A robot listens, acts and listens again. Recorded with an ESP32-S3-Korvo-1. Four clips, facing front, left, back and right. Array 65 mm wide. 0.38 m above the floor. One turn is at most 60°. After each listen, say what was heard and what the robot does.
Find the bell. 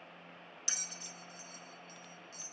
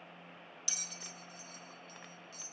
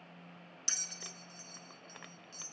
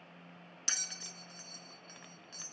The bell: 85° right. Turn 60° right.
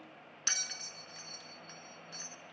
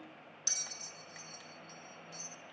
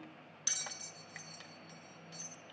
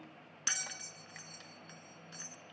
The bell is now 50° right. Turn 50° right.
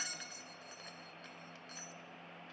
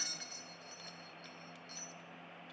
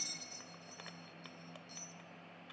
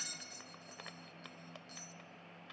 Facing the bell, under 1 m away.